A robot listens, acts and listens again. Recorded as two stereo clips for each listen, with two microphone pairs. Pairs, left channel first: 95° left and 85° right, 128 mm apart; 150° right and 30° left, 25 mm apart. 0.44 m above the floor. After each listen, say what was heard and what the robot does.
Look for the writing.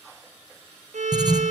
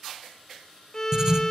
The writing: 25° right. Turn 25° right.
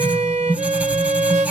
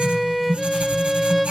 Facing the writing.